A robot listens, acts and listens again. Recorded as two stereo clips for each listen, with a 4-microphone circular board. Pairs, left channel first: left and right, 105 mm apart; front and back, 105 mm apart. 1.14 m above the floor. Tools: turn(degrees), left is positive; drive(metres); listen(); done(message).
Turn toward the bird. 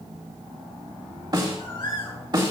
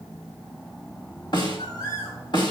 turn(degrees=50)
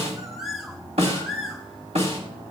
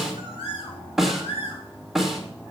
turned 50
done("Facing the bird, 2 to 4 m away.")